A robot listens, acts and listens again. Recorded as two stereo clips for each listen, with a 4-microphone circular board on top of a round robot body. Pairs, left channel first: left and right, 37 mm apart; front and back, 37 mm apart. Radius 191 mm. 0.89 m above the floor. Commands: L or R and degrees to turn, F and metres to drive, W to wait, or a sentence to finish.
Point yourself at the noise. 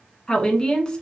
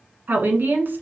L160
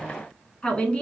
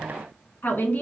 L30
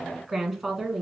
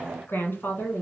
Found it: a woman speaking, straight ahead, 1 to 2 m away.